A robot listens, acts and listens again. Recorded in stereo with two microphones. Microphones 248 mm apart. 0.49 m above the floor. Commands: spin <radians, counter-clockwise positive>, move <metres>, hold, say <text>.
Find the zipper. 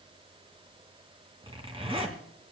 spin -0.35
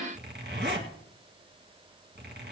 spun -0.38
spin -2.36
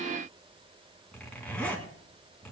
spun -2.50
say Found it: a zipper, straight ahead, 2 to 4 m away.